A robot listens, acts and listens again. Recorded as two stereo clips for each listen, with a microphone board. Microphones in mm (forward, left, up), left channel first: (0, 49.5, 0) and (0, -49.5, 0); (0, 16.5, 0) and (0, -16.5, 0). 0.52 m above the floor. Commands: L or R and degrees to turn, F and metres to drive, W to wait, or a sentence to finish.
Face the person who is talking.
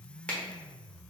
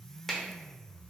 W
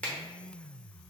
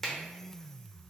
W
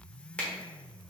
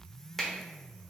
I can't make out anyone speaking to turn to.